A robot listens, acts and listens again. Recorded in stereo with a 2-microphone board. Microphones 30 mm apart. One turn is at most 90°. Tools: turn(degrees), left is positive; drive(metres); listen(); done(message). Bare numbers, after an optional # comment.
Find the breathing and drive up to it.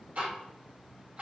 listen()
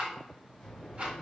# The breathing: about 25° left or 155° left.
turn(25)
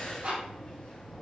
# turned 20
# So it is at 130° left.
turn(90)
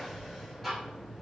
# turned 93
# The breathing is now 35° left.
turn(35)
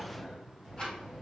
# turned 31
drive(1.0)
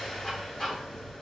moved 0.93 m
# The breathing is now 10° left.
turn(10)
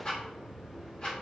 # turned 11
drive(1.0)
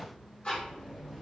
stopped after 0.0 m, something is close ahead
done("I am next to the breathing.")